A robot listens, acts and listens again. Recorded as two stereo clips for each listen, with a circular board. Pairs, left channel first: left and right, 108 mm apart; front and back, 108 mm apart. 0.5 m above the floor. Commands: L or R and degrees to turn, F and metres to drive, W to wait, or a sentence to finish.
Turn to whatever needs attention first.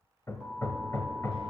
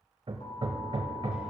R10
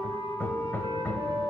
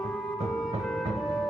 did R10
W
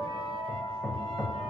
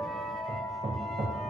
Facing the alarm, 2 to 4 m away.